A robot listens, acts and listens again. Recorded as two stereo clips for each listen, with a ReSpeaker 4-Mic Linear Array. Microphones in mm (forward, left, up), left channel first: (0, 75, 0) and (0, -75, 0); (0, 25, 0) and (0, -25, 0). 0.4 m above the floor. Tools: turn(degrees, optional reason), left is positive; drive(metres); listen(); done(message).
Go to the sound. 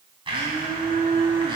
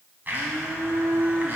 turn(degrees=-35, reason="The blender: about 35° right or 145° right.")
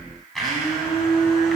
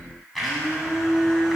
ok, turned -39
drive(metres=1.0)
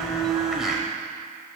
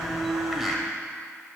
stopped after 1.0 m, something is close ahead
done("I am next to the blender.")